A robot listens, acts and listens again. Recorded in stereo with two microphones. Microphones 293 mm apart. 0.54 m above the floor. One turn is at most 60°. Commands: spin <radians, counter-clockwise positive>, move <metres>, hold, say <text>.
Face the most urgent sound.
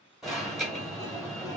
spin 0.52
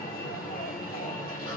spin 1.05
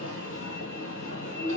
spin 1.05
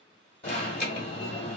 spin 0.61
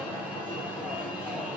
say Found it: an alarm, straight ahead, 1 to 2 m away.